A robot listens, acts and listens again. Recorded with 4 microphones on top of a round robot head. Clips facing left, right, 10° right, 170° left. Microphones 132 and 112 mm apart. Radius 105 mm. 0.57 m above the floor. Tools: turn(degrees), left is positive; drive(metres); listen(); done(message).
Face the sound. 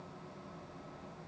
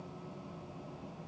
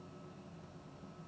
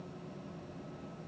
listen()
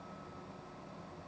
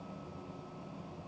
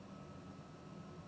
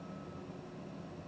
listen()
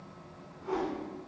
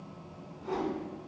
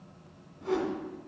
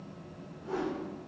turn(degrees=-20)
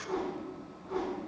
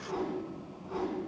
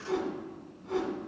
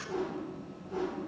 turn(degrees=-10)
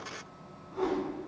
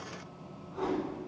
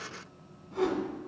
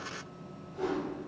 done("Facing the whoosh.")